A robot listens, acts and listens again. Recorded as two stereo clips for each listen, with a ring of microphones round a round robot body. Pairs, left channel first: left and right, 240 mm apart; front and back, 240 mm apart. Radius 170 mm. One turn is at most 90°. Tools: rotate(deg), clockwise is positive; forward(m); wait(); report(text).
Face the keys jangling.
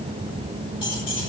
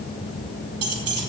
rotate(-90)
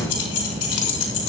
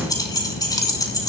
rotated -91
rotate(-75)
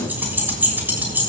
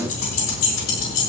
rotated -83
rotate(10)
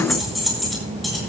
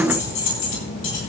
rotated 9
report("Found it: keys jangling, straight ahead, over 4 m away.")